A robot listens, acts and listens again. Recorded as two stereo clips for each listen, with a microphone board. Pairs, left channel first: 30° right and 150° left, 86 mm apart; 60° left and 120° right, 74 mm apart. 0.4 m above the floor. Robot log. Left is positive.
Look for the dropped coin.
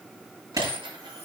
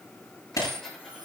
note: The dropped coin: 145° left.
cmd yaw +145
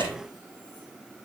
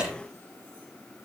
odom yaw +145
end: Facing where the dropped coin came from. I can't hear it now.